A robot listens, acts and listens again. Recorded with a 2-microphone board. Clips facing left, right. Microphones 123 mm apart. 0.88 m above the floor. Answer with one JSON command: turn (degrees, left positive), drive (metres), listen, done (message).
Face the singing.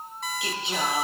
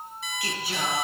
{"turn": 20}
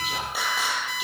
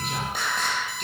{"turn": 30}
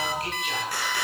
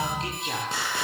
{"turn": -25}
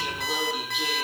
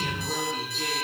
{"turn": 10}
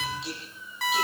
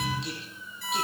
{"done": "Facing the singing, over 4 m away."}